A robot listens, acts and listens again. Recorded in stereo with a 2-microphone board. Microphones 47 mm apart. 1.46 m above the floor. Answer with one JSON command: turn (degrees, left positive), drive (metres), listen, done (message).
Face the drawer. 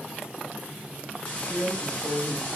{"turn": -55}
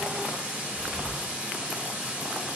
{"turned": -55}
{"listen": true}
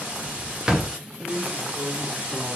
{"turn": -15}
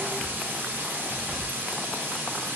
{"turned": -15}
{"listen": true}
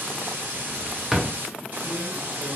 {"done": "Found it: a drawer, straight ahead, under 1 m away."}